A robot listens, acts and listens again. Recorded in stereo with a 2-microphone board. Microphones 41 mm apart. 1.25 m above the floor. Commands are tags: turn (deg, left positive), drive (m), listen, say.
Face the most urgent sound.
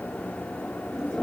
<listen/>
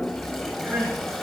<turn deg="-70"/>
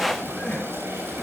<say>Facing the crying, over 4 m away.</say>